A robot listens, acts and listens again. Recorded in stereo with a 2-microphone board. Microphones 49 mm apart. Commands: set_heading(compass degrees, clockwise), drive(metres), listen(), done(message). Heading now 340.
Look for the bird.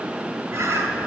set_heading(50)
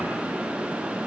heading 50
listen()
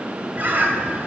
set_heading(85)
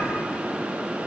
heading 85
listen()
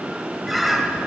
done("Found it: a bird, straight ahead.")